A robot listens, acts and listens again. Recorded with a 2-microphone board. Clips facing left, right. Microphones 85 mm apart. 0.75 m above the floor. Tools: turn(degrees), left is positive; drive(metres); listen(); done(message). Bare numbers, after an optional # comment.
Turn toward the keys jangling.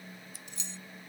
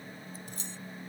# The keys jangling: about 45° right or 135° right.
turn(-45)
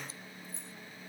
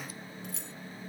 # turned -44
# So it is at 95° right.
turn(-95)
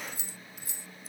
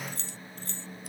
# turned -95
# The keys jangling is now 10° left.
turn(10)
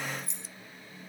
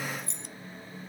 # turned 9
done("Found it: keys jangling, straight ahead.")